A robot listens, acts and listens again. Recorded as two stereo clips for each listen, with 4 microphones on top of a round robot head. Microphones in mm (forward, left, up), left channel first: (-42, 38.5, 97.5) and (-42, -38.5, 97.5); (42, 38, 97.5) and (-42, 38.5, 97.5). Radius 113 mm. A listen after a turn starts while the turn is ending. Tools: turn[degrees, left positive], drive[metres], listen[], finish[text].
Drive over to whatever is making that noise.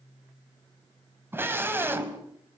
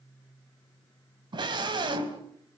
Thought: The scream: 150° right.
Action: turn[-150]
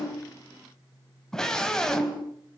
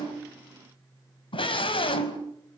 Thought: The scream is now 10° left.
Action: turn[10]
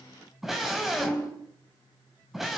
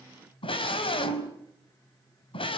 Action: drive[1.0]
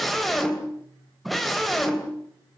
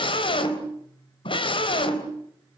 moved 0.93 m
Action: drive[1.0]
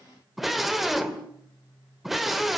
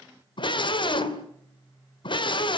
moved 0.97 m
Action: drive[1.0]
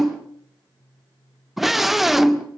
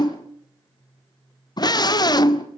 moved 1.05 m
Action: drive[1.0]
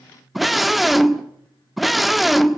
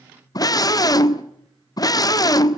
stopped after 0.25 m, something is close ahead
Action: finish[I am next to the scream.]